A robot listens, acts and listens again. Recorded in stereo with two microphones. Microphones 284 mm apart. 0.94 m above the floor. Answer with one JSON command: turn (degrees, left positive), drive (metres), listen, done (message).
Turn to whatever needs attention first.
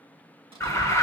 {"turn": 30}
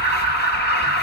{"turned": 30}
{"turn": 140}
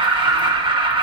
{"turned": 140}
{"turn": -20}
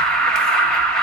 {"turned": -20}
{"done": "Facing the alarm, under 1 m away."}